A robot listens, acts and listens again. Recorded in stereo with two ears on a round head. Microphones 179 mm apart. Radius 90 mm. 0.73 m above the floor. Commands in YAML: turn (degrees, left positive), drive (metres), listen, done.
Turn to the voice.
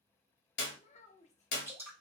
turn: 35
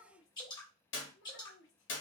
turn: 110
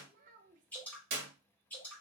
turn: -40
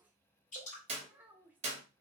turn: -10
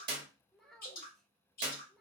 done: "Facing the child speaking, under 1 m away."